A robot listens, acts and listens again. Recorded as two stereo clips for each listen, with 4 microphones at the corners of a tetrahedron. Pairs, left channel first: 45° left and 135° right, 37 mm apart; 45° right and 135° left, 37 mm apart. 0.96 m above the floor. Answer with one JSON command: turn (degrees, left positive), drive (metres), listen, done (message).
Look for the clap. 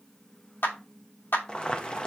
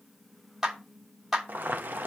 {"turn": 50}
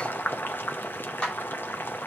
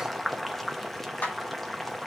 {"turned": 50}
{"turn": -15}
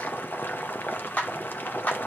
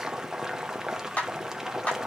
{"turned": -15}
{"done": "Facing the clap, 2 to 4 m away."}